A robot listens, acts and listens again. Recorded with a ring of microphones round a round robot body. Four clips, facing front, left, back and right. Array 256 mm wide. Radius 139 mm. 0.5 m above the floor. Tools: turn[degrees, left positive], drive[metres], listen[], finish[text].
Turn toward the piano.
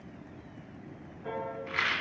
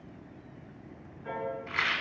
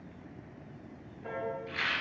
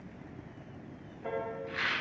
Thought: The piano: 100° right.
Action: turn[-100]
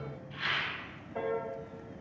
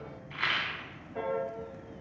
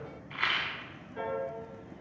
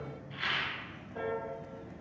Thought: The piano is now 10° left.
Action: turn[10]
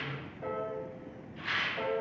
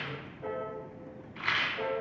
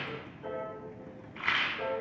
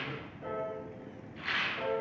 Action: finish[Facing the piano.]